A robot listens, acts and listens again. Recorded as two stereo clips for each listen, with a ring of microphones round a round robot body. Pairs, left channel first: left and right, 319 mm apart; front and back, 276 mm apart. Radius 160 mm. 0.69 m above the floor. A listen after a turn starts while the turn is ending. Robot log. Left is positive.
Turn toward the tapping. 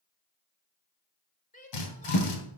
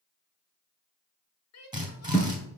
note: The tapping: 65° left.
cmd yaw +65
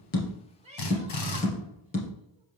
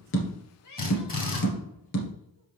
note: The tapping is now 20° left.
cmd yaw +20
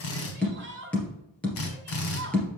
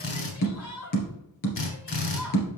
end: Facing the tapping.